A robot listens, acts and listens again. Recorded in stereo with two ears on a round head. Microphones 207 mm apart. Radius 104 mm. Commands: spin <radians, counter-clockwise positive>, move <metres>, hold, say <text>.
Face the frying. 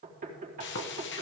spin 0.87
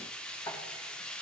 say Found it: frying, straight ahead.